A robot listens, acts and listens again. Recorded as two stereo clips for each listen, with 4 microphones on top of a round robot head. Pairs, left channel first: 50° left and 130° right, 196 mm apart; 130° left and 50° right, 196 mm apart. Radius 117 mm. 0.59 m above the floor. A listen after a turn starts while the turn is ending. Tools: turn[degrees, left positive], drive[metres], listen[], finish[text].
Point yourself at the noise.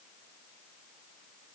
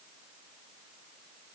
Action: listen[]
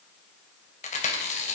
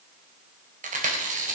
Action: finish[Found it: chewing, straight ahead.]